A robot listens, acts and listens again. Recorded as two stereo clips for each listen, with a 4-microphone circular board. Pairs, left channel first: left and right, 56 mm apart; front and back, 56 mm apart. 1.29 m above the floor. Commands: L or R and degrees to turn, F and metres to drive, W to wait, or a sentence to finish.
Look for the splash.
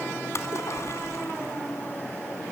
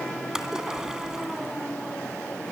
L100
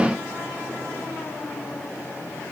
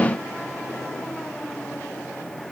I heard a splash from this way, but can't make it out now.